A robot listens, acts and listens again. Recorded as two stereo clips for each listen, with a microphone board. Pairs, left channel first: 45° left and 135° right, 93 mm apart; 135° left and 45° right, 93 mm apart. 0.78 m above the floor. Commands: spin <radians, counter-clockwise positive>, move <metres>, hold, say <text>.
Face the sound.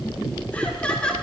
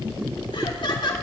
spin 2.18
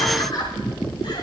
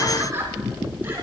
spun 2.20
spin 0.26
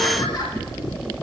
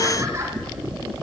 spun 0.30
hold
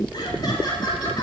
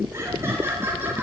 spin 0.35
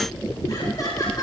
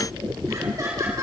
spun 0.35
say Found it: laughter, straight ahead, 2 to 4 m away.